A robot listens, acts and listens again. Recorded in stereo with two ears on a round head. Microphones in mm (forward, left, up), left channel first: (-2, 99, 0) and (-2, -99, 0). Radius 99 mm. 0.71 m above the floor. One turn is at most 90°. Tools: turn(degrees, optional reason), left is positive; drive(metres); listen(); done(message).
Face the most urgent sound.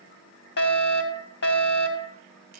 turn(degrees=50, reason="The fire alarm: about 50° left or 130° left.")
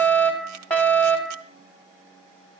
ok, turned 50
done("Facing the fire alarm, 2 to 4 m away.")